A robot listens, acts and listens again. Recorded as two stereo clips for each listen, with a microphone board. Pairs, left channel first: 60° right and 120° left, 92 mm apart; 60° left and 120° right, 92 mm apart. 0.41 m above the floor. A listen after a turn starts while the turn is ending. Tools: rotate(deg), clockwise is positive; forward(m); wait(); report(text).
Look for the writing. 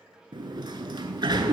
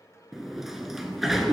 wait()
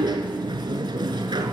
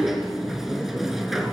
wait()
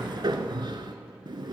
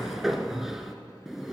report("I can't make out writing to turn to.")